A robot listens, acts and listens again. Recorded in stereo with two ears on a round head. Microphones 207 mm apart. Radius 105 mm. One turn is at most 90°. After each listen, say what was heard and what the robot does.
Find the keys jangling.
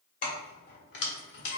The keys jangling: about 50° left or 130° left. Turn 50° left.
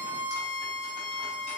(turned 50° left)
Keep listening.
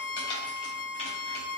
So it is at 25° left. Turn 25° left.
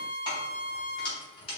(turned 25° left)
The keys jangling is now 25° left. Turn 25° left.
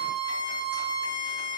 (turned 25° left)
Keep listening.
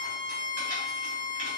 Keep listening.
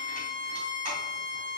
Facing where the keys jangling came from. I can't hear it now.